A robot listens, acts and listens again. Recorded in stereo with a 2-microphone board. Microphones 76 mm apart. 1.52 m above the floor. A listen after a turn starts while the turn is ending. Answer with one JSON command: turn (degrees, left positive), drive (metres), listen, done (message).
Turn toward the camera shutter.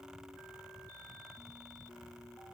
{"listen": true}
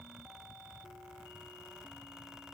{"listen": true}
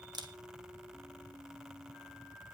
{"turn": -65}
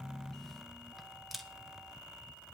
{"done": "Facing the camera shutter."}